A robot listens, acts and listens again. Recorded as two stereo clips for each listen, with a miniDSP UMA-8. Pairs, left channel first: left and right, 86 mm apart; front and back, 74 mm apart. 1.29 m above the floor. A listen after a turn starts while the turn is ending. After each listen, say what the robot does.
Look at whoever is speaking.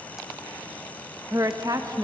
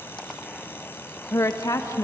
Turn 45° right.
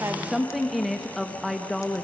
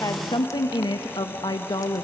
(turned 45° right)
Found it: a woman speaking, straight ahead.